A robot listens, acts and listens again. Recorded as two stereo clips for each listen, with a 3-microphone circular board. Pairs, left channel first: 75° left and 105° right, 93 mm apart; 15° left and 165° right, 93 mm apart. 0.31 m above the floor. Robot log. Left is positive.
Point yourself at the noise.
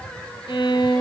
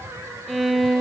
note: The violin: 105° left.
cmd yaw +105
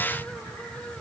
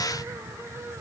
cmd idle
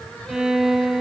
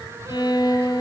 note: The violin is now 20° right.
cmd yaw -20
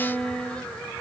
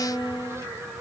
end: Facing the violin, 1 to 2 m away.